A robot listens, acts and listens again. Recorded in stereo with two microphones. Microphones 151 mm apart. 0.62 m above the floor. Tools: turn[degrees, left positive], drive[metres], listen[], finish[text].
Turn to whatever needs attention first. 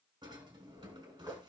Action: listen[]
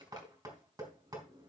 Action: listen[]
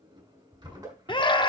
Thought: The scream: about 35° left or 145° left.
Action: turn[35]
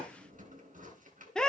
Action: finish[Facing the scream.]